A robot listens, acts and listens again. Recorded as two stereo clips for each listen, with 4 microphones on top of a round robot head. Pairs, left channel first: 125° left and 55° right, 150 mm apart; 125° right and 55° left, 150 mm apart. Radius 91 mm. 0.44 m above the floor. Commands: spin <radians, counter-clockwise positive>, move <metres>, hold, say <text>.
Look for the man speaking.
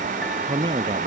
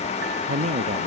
say Found it: a man speaking, straight ahead.